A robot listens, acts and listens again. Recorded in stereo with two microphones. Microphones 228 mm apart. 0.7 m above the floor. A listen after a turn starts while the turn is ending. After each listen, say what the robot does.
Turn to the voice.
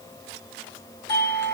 Keep listening.
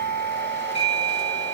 Keep listening.
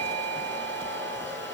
I can't make out anyone speaking to turn to.